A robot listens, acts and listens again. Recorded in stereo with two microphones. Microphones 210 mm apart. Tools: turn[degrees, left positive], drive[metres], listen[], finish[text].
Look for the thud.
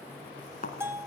Thought: The thud: about 40° left or 140° left.
Action: turn[40]
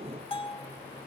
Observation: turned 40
Action: listen[]
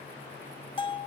Action: finish[I heard a thud, but can't make it out now. It was about straight ahead or 100° left.]